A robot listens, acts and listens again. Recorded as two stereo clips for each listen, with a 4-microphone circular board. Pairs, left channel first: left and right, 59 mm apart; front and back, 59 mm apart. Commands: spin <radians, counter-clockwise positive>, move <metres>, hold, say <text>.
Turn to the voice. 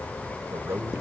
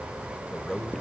spin -1.40
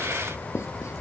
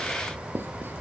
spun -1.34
hold
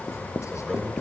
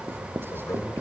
hold
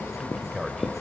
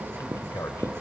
say Facing the man speaking.